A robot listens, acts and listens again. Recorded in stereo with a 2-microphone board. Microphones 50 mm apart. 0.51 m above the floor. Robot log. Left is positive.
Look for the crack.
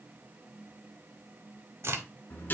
note: The crack: about 55° right or 125° right.
cmd yaw -55
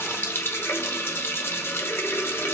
cmd idle
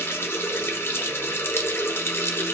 end: I heard a crack, but can't make it out now. It was about straight ahead or 70° right.